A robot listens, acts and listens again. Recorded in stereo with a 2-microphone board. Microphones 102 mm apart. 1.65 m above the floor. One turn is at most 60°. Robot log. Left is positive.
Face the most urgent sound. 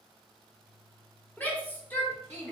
note: The shout: about 15° left or 165° left.
cmd yaw +15
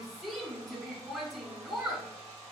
end: Found it: a shout, straight ahead.